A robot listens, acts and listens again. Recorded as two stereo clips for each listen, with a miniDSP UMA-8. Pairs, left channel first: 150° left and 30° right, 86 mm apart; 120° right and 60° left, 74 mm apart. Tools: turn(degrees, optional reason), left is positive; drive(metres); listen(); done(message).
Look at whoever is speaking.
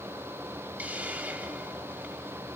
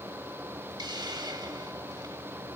listen()
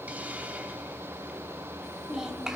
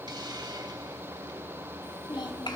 turn(degrees=-115, reason="The child speaking: 115° right.")
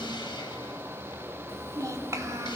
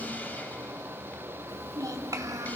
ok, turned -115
turn(degrees=20, reason="The child speaking is now 20° left.")
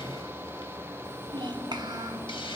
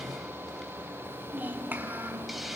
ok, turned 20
done("Facing the child speaking.")